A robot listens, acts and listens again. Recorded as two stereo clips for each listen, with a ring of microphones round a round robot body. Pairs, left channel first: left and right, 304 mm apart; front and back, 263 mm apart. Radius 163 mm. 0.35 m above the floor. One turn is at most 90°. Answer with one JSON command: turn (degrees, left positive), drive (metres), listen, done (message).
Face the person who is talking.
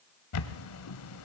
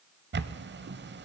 {"listen": true}
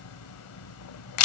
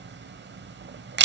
{"listen": true}
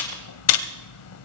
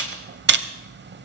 {"done": "I can't make out anyone speaking to turn to."}